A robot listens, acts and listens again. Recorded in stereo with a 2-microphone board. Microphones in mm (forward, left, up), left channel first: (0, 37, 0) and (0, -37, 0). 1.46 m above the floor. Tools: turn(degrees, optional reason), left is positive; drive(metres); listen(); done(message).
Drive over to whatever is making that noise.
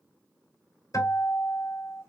turn(degrees=60, reason="The guitar: about 60° left or 120° left.")
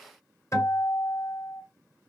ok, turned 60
turn(degrees=50, reason="So it is at 50° left.")
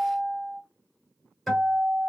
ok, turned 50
drive(metres=1.0)
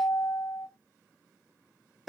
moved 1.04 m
drive(metres=1.0)
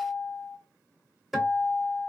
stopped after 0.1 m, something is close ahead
done("Arrived at the guitar, straight ahead.")